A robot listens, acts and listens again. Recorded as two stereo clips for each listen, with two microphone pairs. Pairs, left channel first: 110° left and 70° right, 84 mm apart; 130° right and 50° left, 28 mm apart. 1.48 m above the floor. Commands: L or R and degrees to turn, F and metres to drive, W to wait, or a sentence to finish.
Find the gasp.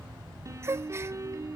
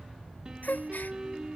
R130
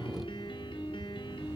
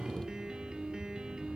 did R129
I heard a gasp from this way, but can't make it out now.